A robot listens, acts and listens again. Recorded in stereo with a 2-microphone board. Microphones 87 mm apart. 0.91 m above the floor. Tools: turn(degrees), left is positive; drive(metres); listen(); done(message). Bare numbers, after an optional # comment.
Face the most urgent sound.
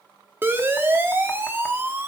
# The siren: about 25° right or 155° right.
turn(-25)
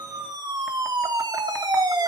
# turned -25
# So it is at 130° right.
turn(-130)
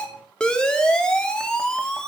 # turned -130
# The siren is now 10° left.
turn(10)
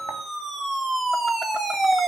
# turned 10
done("Found it: a siren, straight ahead.")